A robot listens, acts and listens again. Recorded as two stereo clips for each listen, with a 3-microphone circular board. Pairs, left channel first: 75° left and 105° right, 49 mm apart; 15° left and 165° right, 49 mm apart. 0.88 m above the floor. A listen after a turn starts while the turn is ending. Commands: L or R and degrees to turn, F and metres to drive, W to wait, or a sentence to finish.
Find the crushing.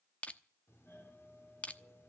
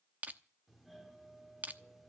L140
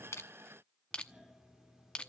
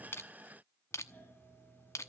L10
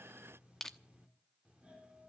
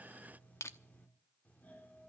Found it: crushing, straight ahead.